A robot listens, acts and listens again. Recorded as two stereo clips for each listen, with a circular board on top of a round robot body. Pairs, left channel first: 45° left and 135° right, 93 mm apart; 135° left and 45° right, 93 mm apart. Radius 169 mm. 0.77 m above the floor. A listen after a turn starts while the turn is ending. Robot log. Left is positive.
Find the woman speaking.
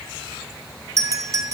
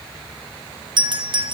cmd idle
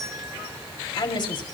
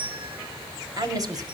end: Facing the woman speaking.